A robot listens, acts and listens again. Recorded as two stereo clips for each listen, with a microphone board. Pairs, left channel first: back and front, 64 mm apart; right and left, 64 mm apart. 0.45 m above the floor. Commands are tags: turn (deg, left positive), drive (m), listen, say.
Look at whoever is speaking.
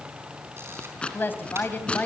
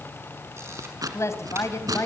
<turn deg="-120"/>
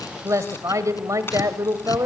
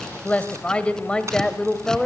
<turn deg="-10"/>
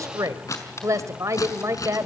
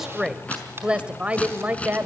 <turn deg="30"/>
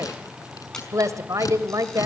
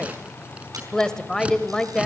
<turn deg="-10"/>
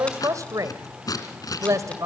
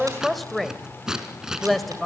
<say>Facing the woman speaking.</say>